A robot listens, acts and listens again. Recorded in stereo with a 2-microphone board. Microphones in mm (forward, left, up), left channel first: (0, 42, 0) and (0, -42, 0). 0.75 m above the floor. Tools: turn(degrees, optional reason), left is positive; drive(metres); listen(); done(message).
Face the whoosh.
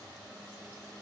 listen()
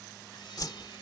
turn(degrees=55, reason="The whoosh: about 55° left or 125° left.")
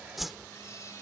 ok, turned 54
done("Facing the whoosh.")